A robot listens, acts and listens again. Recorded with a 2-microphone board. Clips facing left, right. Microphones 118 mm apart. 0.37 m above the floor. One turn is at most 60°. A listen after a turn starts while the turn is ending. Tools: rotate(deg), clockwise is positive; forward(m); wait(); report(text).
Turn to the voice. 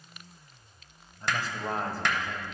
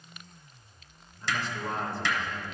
rotate(-40)
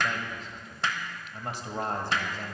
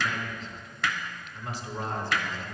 rotate(-60)
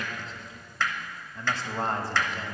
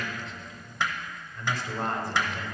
rotate(-40)
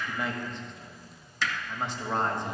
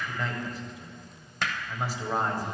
rotate(10)
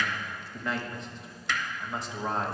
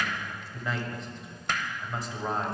report("Found it: a man speaking, straight ahead, 1 to 2 m away.")